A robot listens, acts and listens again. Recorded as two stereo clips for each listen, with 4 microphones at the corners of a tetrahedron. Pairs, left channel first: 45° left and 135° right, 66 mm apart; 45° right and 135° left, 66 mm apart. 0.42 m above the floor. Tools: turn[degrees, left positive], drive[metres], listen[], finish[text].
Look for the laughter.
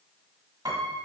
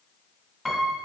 Action: listen[]
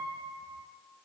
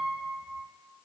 Action: listen[]
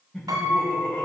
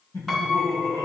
Thought: The laughter: 25° right.
Action: turn[-25]
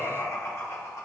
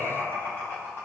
Thought: The laughter is now 10° left.
Action: turn[10]
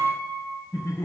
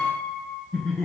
Thought: The laughter is now 10° left.
Action: turn[10]
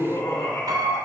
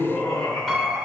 Thought: The laughter is now 10° left.
Action: turn[10]
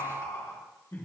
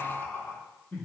Action: finish[Facing the laughter, 2 to 4 m away.]